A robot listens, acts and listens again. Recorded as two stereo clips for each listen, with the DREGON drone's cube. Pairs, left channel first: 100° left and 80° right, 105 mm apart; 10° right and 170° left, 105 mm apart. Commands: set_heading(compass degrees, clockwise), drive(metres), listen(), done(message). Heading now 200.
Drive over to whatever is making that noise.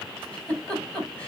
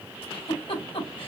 set_heading(175)
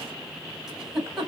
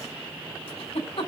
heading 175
set_heading(165)
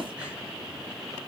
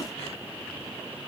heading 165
listen()
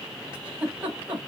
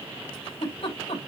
drive(1.0)
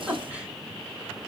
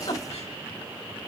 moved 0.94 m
drive(1.0)
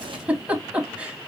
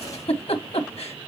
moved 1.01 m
drive(1.0)
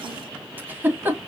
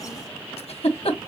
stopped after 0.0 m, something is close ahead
done("I am next to the giggle.")